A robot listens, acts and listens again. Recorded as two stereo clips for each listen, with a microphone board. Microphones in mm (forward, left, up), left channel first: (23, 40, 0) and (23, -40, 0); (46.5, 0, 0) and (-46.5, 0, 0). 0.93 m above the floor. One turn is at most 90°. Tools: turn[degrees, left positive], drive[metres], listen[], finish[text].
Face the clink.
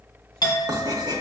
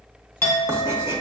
Thought: The clink: 60° left.
Action: turn[60]
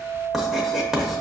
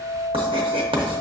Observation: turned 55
Action: finish[Found it: a clink, straight ahead.]